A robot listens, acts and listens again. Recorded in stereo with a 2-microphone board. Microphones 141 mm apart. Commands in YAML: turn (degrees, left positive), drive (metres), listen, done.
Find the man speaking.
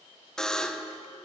listen: true
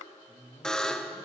turn: 50
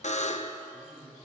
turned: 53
done: "Found it: a man speaking, straight ahead."